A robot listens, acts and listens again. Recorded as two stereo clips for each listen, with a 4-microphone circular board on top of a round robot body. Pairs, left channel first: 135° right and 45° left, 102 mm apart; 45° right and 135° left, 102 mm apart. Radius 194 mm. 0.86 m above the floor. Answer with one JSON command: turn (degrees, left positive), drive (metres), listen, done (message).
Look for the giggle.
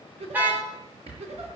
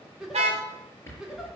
{"turn": 50}
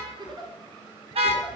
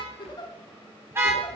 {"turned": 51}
{"done": "Found it: a giggle, straight ahead."}